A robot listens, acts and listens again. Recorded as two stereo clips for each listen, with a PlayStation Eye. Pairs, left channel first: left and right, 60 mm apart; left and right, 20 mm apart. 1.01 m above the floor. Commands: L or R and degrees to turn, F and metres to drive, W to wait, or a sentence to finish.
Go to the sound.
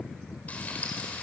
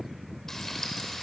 L25
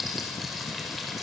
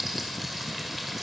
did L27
F1.0
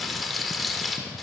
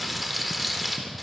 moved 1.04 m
F1.0
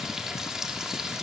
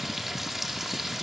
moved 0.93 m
R10
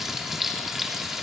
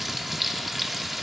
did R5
F1.0
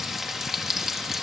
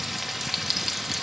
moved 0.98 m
F1.0
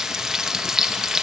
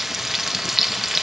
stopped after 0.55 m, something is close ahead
R10
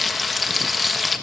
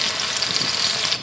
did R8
Arrived at the frying, straight ahead.